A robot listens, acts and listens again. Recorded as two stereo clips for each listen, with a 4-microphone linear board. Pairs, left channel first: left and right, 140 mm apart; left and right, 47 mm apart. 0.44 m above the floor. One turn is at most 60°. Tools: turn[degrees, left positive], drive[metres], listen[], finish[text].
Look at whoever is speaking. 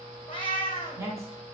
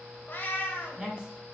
Thought: The woman speaking: about 20° right or 160° right.
Action: turn[-20]
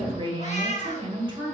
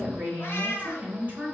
Thought: So it is at 135° right.
Action: turn[-60]
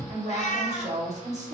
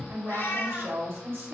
Thought: The woman speaking is now 80° right.
Action: turn[-60]
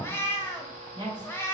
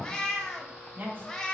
Thought: The woman speaking is now 35° right.
Action: turn[-35]
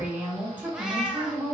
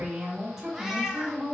Thought: The woman speaking is now 15° right.
Action: turn[-15]
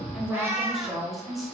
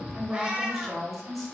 Action: finish[Facing the woman speaking, 1 to 2 m away.]